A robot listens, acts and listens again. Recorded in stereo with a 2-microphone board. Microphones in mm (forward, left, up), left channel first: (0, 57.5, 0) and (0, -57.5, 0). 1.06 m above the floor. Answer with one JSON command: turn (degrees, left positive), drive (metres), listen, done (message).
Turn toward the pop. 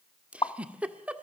{"turn": 45}
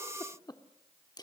{"listen": true}
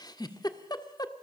{"done": "I heard a pop, but can't make it out now. It was about straight ahead or 90° left."}